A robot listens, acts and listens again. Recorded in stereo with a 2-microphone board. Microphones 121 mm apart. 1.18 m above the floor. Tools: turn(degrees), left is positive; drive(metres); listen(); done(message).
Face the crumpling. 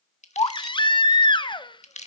turn(degrees=75)
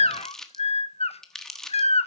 done("Facing the crumpling, 1 to 2 m away.")